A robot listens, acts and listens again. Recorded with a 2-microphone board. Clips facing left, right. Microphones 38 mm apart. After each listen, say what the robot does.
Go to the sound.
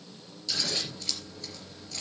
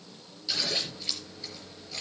Turn 20° right.
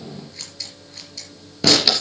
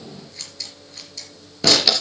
Drive 1.0 m forward.
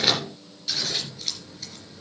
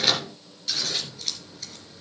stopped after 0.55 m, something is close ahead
Something is in my way. I am facing the scissors but have not reached it.